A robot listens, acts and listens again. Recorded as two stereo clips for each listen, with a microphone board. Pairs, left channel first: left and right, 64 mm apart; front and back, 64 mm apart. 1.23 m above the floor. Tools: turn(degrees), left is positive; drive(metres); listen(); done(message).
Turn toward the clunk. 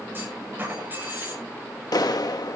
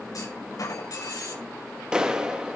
turn(degrees=-30)
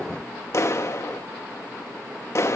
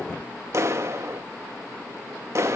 done("I heard a clunk from this way, but can't make it out now.")